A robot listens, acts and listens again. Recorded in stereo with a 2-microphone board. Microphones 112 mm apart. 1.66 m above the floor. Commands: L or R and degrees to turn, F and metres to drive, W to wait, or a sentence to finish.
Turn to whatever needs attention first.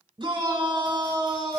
R45
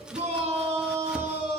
R85
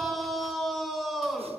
Facing the shout.